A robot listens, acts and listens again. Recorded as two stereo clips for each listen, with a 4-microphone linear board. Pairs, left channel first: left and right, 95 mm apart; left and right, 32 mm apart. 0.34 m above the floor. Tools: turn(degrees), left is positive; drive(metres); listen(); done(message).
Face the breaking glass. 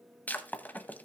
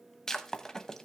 turn(degrees=15)
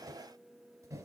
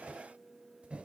listen()
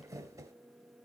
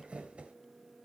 done("I heard breaking glass, but can't make it out now. It was about straight ahead or 150° left.")